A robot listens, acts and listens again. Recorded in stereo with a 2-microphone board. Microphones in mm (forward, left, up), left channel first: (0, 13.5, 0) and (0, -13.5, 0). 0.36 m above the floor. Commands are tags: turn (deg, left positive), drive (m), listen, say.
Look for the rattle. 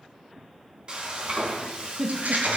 <turn deg="-70"/>
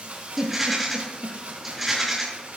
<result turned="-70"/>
<say>Found it: a rattle, straight ahead.</say>